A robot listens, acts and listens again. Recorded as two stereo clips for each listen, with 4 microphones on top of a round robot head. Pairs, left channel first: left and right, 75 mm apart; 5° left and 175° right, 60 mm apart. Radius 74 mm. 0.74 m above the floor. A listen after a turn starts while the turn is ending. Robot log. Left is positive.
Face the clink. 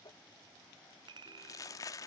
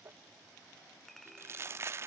note: The clink: 80° right.
cmd yaw -80
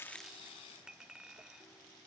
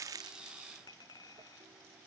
note: The clink is now 10° right.
cmd yaw -10
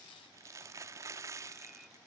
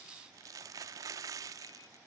cmd idle
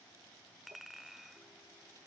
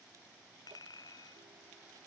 end: Found it: a clink, straight ahead.